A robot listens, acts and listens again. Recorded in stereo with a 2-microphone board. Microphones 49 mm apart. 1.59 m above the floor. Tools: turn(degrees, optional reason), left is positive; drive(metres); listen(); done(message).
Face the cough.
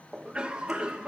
turn(degrees=-15, reason="The cough: about 15° right or 165° right.")
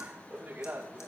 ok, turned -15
turn(degrees=-145, reason="So it is at 145° right.")
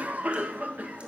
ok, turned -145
turn(degrees=-35, reason="The cough is now 35° right.")
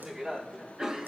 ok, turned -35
turn(degrees=-15, reason="The cough is now 15° right.")
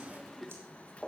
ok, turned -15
done("Found it: a cough, straight ahead, 2 to 4 m away.")